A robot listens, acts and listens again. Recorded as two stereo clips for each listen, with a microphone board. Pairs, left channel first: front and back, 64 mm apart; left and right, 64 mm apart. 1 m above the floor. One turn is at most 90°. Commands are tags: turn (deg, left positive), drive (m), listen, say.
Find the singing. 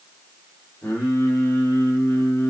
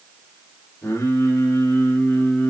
<turn deg="35"/>
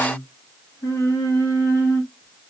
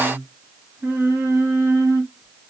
<turn deg="-45"/>
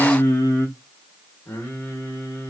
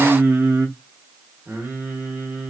<turn deg="-40"/>
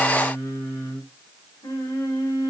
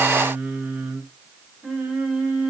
<turn deg="-20"/>
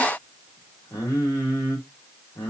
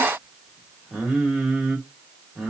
<say>Found it: singing, straight ahead, 1 to 2 m away.</say>